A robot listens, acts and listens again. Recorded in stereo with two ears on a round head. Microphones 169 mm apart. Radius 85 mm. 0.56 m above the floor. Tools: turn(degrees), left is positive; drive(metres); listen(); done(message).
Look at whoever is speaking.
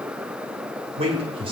turn(degrees=-30)
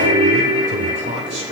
turn(degrees=-35)
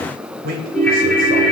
turn(degrees=-125)
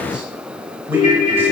listen()
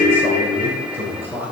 turn(degrees=-10)
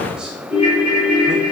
listen()
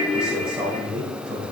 done("Facing the man speaking.")